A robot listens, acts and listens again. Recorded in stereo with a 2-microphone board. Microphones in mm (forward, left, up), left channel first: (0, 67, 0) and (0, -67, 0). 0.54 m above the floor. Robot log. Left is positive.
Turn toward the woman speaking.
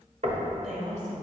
note: The woman speaking: about 75° right or 105° right.
cmd yaw -75
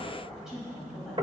end: Facing the woman speaking.